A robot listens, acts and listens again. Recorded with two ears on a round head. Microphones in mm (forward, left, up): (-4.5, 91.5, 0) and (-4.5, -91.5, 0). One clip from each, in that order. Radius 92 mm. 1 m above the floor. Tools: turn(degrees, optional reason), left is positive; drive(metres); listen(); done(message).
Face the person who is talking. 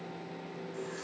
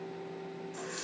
listen()
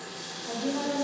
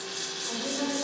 turn(degrees=60, reason="The woman speaking: about 60° left or 120° left.")
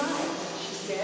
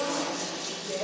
turn(degrees=65, reason="So it is at 65° left.")
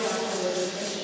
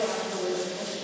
done("Facing the woman speaking, over 4 m away.")